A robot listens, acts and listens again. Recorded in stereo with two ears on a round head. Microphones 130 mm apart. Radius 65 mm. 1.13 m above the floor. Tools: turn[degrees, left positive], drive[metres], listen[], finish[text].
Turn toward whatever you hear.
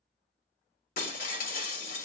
Thought: The breaking glass: about 65° left or 115° left.
Action: turn[65]
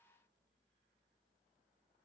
Action: listen[]
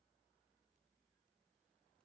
Action: finish[I heard breaking glass, but can't make it out now. It was about straight ahead or 50° left.]